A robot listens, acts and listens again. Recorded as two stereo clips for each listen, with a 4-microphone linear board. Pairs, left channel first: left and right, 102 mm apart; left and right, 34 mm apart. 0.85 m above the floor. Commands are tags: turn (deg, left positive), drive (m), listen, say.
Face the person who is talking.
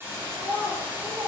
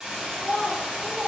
<turn deg="-55"/>
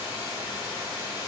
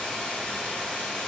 <listen/>
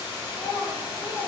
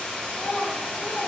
<say>Found it: a child speaking, straight ahead, under 1 m away.</say>